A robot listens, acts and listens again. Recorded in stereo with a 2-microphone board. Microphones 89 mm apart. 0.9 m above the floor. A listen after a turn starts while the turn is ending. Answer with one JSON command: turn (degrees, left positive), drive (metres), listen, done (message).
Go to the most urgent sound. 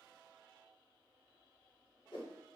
{"listen": true}
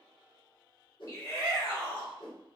{"turn": 35}
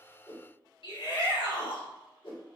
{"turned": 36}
{"turn": 105}
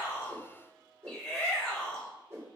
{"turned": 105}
{"drive": 1.0}
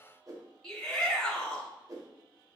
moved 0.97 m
{"turn": 10}
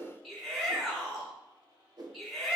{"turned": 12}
{"drive": 1.0}
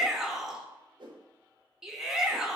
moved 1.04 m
{"drive": 1.0}
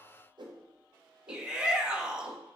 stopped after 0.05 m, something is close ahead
{"turn": -10}
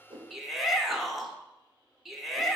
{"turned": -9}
{"done": "Arrived at the shout, straight ahead."}